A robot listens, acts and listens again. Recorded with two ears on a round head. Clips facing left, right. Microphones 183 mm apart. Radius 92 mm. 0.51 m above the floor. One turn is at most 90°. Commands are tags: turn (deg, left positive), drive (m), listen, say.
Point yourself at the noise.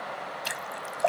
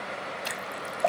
<turn deg="30"/>
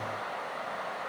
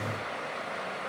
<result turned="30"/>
<listen/>
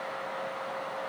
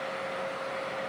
<say>I heard a splash, but can't make it out now. It was about 30° right or 150° left.</say>